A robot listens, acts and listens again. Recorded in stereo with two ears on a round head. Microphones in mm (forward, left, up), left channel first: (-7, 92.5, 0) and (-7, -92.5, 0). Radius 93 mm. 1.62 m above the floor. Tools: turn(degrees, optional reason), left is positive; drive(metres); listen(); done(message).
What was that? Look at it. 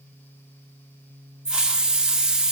turn(degrees=-30)
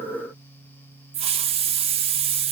turn(degrees=-145, reason="So it is at 145° right.")
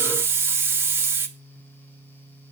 turn(degrees=-15, reason="The hiss is now 15° right.")
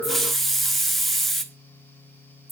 done("Facing the hiss, 1 to 2 m away.")